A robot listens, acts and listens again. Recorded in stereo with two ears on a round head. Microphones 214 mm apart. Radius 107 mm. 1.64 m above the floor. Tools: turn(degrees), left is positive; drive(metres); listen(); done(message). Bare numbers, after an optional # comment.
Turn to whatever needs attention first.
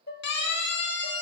# The siren: about 45° left or 135° left.
turn(45)
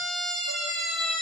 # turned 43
done("Facing the siren, 2 to 4 m away.")